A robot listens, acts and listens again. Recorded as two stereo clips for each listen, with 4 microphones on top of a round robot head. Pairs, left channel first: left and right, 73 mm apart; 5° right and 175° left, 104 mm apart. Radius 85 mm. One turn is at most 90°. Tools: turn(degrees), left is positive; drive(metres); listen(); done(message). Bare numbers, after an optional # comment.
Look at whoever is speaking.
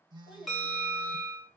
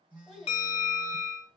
# The child speaking: 85° left.
turn(85)
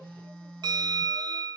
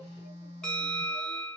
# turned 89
listen()
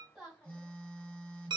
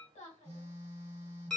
done("Found it: a child speaking, straight ahead.")